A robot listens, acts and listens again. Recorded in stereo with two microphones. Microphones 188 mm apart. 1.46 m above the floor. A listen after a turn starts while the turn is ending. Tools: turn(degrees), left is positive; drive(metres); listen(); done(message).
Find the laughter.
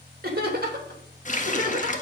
turn(degrees=-50)
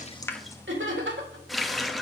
turn(degrees=-85)
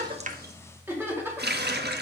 turn(degrees=-10)
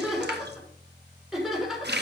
done("Facing the laughter, over 4 m away.")